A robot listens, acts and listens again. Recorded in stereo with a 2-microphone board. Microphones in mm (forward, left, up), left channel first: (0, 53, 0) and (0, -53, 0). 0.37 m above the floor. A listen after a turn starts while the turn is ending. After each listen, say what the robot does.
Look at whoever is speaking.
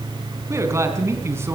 Turn 25° right.
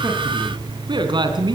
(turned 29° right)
Turn 135° right.
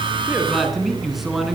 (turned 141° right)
Facing the man speaking, over 4 m away.